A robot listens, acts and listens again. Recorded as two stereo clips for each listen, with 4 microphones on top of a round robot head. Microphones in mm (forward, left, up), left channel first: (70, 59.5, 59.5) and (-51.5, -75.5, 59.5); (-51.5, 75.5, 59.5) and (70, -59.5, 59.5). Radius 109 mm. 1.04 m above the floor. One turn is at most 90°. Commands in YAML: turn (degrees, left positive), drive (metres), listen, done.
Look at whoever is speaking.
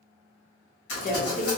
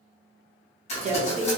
done: "Facing the woman speaking, under 1 m away."